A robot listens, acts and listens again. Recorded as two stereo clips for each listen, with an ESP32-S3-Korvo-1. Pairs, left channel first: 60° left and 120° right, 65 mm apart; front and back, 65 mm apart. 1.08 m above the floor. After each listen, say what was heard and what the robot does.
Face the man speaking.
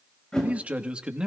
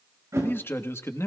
The man speaking: 45° right. Turn 45° right.
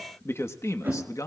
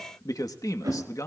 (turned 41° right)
The man speaking is now 30° left. Turn 30° left.
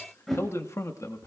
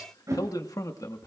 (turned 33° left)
The man speaking is now 25° left. Turn 25° left.
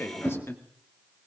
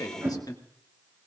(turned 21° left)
The man speaking is now 10° left. Turn 10° left.
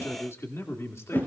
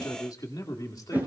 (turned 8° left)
The man speaking is now 15° left. Turn 15° left.
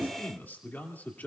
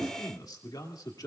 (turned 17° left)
Facing the man speaking.